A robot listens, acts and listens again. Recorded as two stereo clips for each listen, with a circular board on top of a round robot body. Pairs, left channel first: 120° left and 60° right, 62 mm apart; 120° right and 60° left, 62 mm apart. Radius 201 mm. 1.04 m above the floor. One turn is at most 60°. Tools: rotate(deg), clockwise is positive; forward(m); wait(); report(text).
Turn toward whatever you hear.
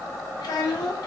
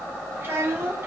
rotate(-60)
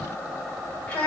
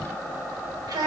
rotate(-50)
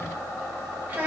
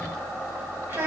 report("Facing the child speaking, under 1 m away.")